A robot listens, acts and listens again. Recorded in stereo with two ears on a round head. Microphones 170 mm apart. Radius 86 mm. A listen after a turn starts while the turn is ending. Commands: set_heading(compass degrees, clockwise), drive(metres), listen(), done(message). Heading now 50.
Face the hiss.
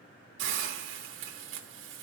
set_heading(115)
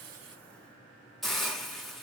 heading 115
done("Facing the hiss.")